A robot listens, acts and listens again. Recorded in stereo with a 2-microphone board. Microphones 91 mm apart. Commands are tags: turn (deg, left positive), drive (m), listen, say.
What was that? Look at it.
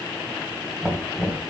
<turn deg="-30"/>
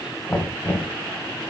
<turn deg="25"/>
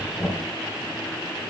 <say>Found it: knocking, straight ahead, 1 to 2 m away.</say>